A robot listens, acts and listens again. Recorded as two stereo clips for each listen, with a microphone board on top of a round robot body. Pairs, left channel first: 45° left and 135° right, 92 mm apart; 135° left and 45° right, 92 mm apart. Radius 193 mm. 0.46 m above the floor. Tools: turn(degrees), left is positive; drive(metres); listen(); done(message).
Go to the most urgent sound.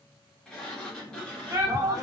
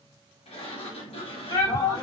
turn(degrees=175)
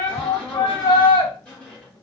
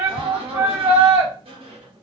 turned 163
turn(degrees=15)
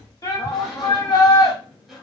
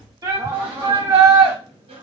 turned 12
drive(metres=1.0)
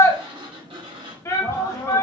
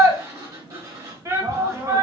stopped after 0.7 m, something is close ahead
done("I am next to the shout.")